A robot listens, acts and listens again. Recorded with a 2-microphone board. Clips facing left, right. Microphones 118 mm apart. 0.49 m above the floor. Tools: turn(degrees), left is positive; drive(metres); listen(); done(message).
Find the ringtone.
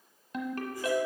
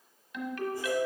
turn(degrees=40)
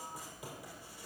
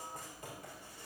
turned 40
listen()
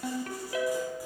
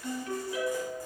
turn(degrees=105)
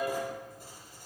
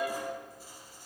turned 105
turn(degrees=-10)
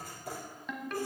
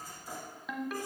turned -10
done("Found it: a ringtone, straight ahead.")